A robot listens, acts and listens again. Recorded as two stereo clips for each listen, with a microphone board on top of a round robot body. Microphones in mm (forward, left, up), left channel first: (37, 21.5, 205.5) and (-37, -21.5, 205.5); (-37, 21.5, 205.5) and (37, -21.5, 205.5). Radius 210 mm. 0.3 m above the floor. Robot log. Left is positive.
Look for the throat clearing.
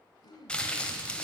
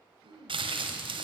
end: Facing the throat clearing.